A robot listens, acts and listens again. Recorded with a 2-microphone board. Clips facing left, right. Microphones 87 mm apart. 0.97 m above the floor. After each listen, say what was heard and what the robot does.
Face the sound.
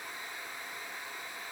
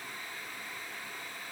Keep listening.
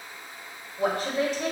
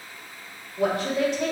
Turn 90° right.
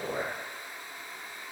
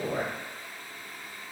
Found it: a woman speaking, straight ahead.